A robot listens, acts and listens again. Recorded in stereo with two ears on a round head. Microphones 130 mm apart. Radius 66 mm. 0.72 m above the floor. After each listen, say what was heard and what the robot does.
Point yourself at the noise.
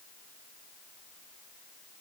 Keep listening.
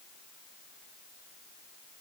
Keep listening.
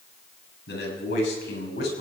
Turn 90° left.
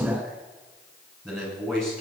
Facing the man speaking, over 4 m away.